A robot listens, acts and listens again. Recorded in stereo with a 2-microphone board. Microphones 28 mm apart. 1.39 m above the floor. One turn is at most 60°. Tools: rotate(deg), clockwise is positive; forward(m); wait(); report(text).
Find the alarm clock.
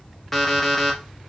rotate(-30)
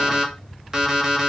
rotate(25)
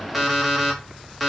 report("Facing the alarm clock.")